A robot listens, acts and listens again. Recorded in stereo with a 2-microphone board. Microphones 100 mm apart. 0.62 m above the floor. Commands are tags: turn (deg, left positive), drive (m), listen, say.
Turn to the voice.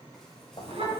<turn deg="-70"/>
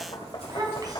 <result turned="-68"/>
<turn deg="-40"/>
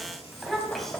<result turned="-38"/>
<say>Facing the child speaking.</say>